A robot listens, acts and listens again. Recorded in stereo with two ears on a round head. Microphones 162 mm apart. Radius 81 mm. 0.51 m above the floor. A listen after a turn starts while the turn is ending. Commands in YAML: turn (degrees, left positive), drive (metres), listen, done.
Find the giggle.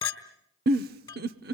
turn: -55
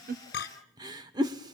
turn: -25
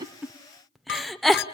done: "Found it: a giggle, straight ahead, under 1 m away."